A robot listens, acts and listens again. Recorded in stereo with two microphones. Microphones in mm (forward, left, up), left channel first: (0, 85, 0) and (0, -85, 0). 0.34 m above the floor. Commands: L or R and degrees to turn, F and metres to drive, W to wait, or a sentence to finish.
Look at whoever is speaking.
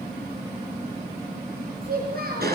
R65
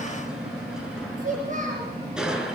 R50
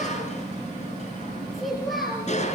Facing the child speaking.